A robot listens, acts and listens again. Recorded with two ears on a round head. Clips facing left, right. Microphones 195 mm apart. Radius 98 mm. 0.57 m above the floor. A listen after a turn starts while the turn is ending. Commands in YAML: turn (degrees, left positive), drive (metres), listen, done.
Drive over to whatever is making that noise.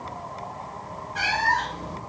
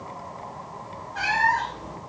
turn: 30
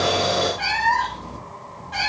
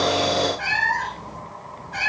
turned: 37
turn: 115
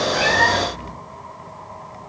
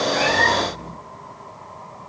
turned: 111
listen: true
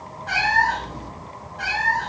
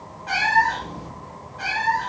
drive: 1.0
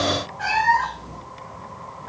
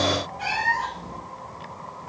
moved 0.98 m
drive: 1.0
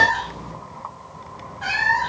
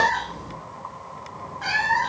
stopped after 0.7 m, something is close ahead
done: "Arrived at the cat meowing, straight ahead."